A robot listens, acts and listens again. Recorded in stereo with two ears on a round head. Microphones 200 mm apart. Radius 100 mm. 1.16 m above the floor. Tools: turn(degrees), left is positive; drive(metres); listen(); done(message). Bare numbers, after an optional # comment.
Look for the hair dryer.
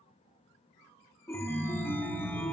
listen()
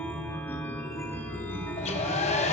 # The hair dryer: about 30° left or 150° left.
turn(30)
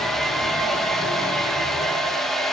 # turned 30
done("Found it: a hair dryer, straight ahead, under 1 m away.")